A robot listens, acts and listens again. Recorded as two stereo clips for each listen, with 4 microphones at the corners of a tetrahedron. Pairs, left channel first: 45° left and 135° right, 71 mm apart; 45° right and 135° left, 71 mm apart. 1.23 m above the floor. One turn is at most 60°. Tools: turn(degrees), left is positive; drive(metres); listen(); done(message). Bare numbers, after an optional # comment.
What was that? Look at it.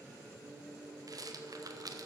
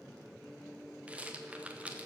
# The rattle: 155° right.
turn(-60)
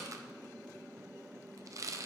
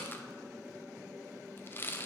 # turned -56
# The rattle is now 100° right.
turn(-60)
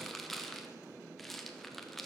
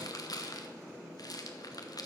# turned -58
# The rattle is now 40° right.
turn(-40)
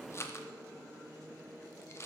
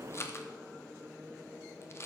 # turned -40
done("Found it: a rattle, straight ahead, 1 to 2 m away.")